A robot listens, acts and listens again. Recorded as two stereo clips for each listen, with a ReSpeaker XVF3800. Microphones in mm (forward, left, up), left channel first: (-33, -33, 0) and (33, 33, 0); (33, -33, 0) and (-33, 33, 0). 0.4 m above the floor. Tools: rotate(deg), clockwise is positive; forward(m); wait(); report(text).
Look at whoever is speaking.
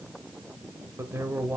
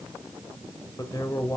rotate(20)
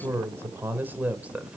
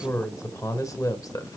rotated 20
rotate(25)
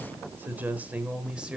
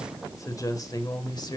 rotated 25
rotate(35)
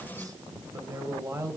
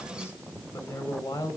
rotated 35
report("Found it: a man speaking, straight ahead.")